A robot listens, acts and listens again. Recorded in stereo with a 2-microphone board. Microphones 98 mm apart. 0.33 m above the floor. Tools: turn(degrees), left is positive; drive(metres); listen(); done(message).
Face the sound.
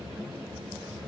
listen()
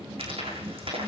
turn(degrees=-70)
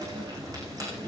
listen()
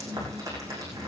turn(degrees=-35)
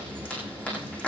turn(degrees=10)
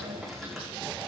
done("Found it: frying, straight ahead.")